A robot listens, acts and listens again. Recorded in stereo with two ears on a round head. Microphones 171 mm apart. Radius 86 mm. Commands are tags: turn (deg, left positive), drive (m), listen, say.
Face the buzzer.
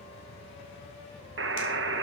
<turn deg="-65"/>
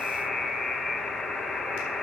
<say>Facing the buzzer, under 1 m away.</say>